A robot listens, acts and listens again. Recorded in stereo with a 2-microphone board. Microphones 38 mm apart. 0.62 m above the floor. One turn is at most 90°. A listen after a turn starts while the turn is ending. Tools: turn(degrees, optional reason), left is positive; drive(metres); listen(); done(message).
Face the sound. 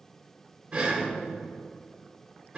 turn(degrees=-30, reason="The breathing: about 30° right or 150° right.")
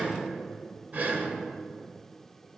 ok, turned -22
turn(degrees=-90, reason="So it is at 130° right.")
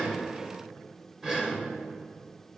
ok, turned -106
turn(degrees=-25, reason="The breathing is now 25° right.")
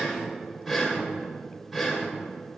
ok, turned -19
done("Facing the breathing, 1 to 2 m away.")